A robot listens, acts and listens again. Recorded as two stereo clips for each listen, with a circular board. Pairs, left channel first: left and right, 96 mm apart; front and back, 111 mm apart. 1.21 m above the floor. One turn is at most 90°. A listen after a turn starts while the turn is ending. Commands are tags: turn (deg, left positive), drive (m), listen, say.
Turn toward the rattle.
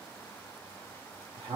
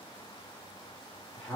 <listen/>
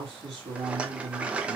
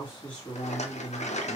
<turn deg="-10"/>
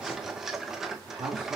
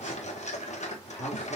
<say>Facing the rattle.</say>